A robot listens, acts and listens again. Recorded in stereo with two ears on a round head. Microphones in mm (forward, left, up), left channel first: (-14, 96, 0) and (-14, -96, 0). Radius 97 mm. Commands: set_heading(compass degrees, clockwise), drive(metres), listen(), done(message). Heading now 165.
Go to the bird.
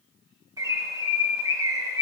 set_heading(180)
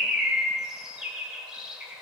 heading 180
drive(1.0)
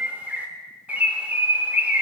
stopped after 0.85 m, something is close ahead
set_heading(190)
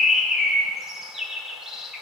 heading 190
done("Arrived at the bird, straight ahead.")